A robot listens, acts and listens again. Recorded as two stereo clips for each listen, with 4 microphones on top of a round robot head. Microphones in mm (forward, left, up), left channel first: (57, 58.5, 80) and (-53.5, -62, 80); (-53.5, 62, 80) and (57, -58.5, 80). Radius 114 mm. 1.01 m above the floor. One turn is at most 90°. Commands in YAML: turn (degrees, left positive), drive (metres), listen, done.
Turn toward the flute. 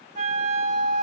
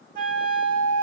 turn: -80
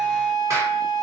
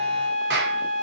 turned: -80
done: "Facing the flute."